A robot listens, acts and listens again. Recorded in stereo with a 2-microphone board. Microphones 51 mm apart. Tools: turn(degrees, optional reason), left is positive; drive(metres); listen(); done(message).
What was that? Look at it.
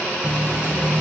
turn(degrees=45, reason="The running tap: about 45° left or 135° left.")
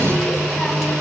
done("Facing the running tap, 2 to 4 m away.")